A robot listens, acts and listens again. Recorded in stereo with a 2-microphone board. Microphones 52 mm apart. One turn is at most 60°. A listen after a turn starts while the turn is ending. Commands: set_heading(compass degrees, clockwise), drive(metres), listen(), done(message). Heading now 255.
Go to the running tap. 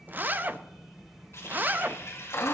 set_heading(195)
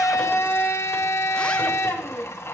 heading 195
listen()
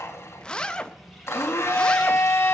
listen()
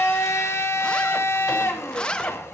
done("I heard a running tap, but can't make it out now. It was about straight ahead or 60° left. I did not reach it.")